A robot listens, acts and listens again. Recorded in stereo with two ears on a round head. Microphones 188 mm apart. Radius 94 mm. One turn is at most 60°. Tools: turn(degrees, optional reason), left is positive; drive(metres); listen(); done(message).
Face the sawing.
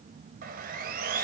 turn(degrees=-40, reason="The sawing: about 40° right or 140° right.")
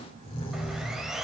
done("Facing the sawing, 2 to 4 m away.")